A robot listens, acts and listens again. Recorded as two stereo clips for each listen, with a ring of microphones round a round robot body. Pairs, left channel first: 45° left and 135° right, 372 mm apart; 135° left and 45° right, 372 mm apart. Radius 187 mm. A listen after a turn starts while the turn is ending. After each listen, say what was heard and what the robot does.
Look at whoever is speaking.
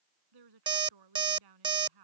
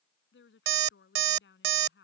The woman speaking: 165° right. Turn 165° right.
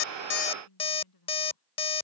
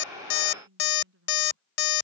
The woman speaking is now 15° left. Turn 15° left.
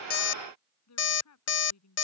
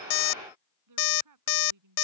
Facing the woman speaking.